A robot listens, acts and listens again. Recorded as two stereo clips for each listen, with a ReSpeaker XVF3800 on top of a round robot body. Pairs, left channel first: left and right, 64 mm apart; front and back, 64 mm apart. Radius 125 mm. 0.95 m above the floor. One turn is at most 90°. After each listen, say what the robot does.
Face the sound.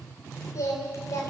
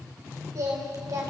Turn 90° left.
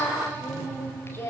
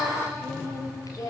Turn 40° left.
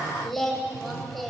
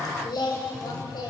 Found it: singing, straight ahead.